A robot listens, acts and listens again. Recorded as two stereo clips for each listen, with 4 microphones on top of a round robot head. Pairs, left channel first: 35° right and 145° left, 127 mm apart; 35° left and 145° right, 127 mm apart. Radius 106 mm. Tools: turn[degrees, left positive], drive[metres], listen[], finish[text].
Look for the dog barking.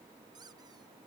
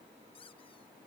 Action: listen[]
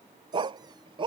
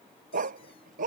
Thought: The dog barking: 165° right.
Action: turn[-165]
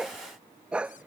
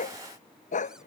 Thought: The dog barking is now 60° left.
Action: turn[60]
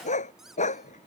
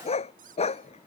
Action: finish[Facing the dog barking.]